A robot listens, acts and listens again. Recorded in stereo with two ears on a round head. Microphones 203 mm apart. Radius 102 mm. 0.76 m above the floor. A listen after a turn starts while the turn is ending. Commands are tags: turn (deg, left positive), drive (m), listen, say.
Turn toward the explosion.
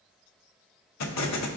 <turn deg="90"/>
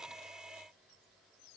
<say>I heard an explosion from this way, but can't make it out now.</say>